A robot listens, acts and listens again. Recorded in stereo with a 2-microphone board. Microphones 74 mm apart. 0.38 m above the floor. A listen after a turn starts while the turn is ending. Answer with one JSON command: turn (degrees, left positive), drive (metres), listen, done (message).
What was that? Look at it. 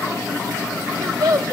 {"turn": -55}
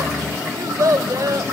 {"turn": -60}
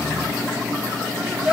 {"turn": -10}
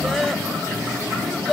{"done": "Found it: a child speaking, straight ahead."}